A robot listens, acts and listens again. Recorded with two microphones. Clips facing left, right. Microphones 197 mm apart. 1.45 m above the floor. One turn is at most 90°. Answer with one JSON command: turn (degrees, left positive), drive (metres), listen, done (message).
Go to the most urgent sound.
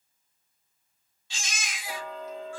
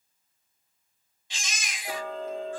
{"turn": -20}
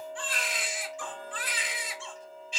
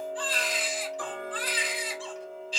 {"turn": -90}
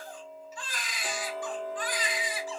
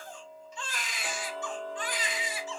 {"turn": -25}
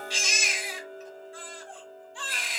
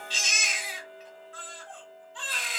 {"turn": 10}
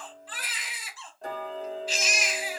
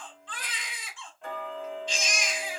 {"drive": 1.0}
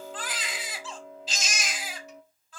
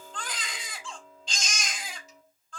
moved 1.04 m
{"drive": 1.0}
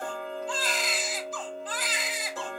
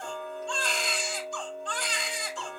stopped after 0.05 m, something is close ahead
{"done": "Arrived at the baby crying, straight ahead."}